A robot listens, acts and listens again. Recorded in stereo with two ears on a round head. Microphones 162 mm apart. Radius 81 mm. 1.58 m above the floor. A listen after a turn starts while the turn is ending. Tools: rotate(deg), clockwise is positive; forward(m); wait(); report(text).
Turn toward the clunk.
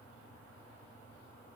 wait()
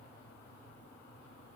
wait()
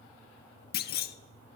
rotate(-60)
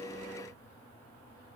wait()
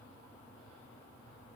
report("I heard a clunk, but can't make it out now. It was about straight ahead or 60° left.")